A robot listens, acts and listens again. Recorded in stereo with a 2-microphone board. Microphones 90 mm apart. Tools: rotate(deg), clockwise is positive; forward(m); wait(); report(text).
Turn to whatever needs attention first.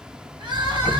rotate(55)
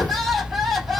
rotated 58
report("Facing the crying.")